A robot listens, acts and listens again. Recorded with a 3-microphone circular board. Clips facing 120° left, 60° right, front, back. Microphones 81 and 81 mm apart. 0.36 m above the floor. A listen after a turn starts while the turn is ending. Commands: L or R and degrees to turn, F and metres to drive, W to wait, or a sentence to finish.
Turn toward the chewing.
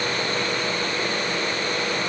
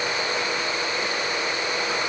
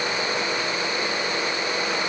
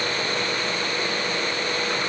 W
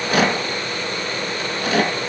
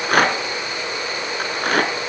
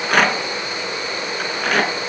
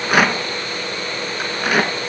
W
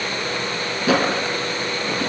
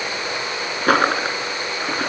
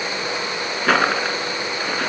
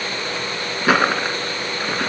I can't make out chewing to turn to.